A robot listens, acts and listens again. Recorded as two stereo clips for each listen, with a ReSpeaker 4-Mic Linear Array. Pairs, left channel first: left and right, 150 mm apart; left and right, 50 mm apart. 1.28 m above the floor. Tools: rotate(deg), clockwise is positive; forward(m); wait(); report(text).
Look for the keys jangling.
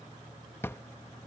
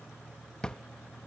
wait()
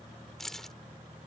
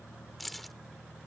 rotate(-30)
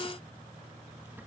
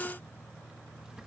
wait()
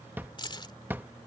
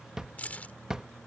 rotate(-145)
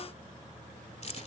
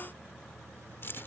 rotate(-50)
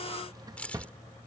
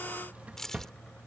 rotate(-10)
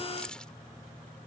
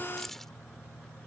report("Found it: keys jangling, straight ahead.")